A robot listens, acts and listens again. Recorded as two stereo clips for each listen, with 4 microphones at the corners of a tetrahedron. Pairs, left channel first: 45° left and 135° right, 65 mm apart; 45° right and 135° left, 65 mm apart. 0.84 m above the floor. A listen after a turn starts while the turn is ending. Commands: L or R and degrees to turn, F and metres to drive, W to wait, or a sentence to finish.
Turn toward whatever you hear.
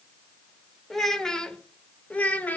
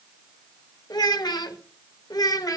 R20
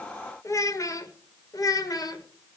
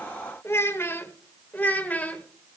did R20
L25
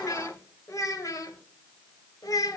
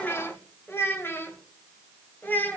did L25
L20
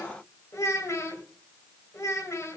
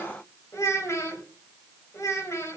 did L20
Found it: a child speaking, straight ahead.